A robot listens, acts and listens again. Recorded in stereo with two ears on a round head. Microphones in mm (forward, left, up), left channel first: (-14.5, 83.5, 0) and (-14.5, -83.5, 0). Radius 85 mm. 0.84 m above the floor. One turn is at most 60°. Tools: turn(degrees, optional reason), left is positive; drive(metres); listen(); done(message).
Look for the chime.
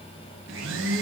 listen()
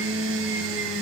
listen()
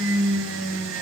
done("I can't make out a chime to turn to.")